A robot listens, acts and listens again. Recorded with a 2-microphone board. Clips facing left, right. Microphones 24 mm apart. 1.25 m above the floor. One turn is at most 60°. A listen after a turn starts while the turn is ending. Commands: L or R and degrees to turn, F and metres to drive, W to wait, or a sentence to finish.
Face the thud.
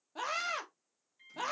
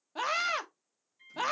W
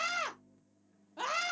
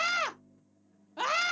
W
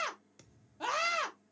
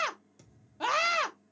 L30
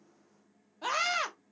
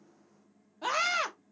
W
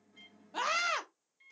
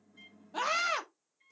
I heard a thud, but can't make it out now. It was about straight ahead or 120° left.